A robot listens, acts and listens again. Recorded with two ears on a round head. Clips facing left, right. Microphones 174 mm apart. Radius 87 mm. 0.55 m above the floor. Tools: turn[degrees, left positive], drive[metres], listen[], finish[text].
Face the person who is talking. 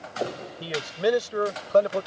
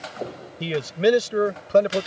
Thought: The man speaking: about 25° right or 155° right.
Action: turn[-25]
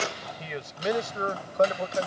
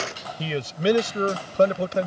Thought: The man speaking: about 40° right or 140° right.
Action: turn[-40]
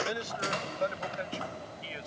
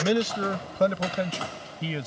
Thought: So it is at 115° right.
Action: turn[-115]
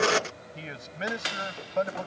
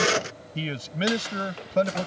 Thought: The man speaking is now 40° right.
Action: turn[-40]
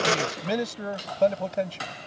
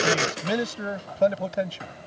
Action: finish[Found it: a man speaking, straight ahead.]